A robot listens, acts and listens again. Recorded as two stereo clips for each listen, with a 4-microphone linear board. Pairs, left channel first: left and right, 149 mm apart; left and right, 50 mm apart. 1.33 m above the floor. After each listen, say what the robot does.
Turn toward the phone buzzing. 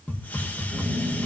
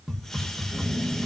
Turn 30° right.
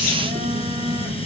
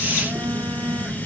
Turn 120° right.
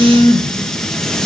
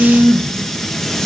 Turn 15° left.
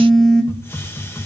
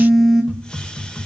Found it: a phone buzzing, straight ahead.